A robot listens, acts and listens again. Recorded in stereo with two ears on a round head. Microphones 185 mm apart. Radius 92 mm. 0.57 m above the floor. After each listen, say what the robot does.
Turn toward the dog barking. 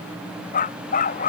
Turn 40° left.
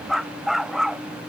Facing the dog barking.